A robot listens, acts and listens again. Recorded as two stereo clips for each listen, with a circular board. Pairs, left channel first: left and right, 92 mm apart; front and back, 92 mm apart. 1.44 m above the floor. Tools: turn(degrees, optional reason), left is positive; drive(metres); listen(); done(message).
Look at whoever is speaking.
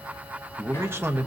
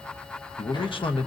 turn(degrees=-25, reason="The man speaking: 25° right.")
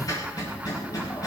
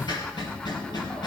listen()
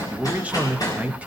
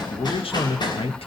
turn(degrees=-15, reason="The man speaking is now 15° right.")
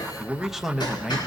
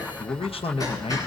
done("Facing the man speaking.")